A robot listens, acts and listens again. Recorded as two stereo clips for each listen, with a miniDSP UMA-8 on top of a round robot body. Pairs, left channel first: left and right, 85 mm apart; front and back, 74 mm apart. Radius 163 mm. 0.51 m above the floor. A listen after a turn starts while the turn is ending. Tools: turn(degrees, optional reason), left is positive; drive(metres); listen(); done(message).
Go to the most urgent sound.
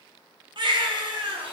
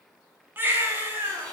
turn(degrees=-115, reason="The baby crying: 115° right.")
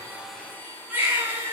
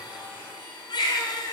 turn(degrees=-20, reason="The baby crying is now 20° right.")
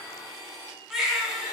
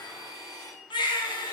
drive(metres=1.0)
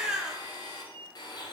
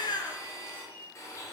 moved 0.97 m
drive(metres=1.0)
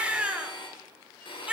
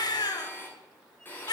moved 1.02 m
turn(degrees=-15, reason="The baby crying is now 15° right.")
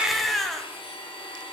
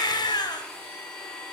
drive(metres=1.0)
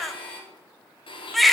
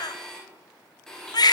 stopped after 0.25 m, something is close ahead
done("Arrived at the baby crying, straight ahead.")